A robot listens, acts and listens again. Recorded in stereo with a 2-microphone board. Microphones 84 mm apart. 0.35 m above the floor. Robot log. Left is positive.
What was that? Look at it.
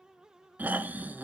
note: The snoring: about 25° right or 155° right.
cmd yaw -25
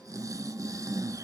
note: So it is at 135° right.
cmd yaw -135
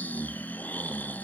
note: The snoring is now 25° left.
cmd yaw +25
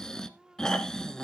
note: The snoring is now 10° left.
cmd yaw +10
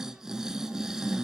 end: Facing the snoring, 1 to 2 m away.